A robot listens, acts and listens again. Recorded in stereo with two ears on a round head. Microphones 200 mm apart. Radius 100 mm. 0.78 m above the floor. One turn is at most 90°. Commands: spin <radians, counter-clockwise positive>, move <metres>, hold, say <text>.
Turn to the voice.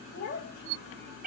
spin 0.87
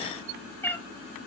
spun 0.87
hold
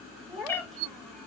say Found it: a child speaking, straight ahead.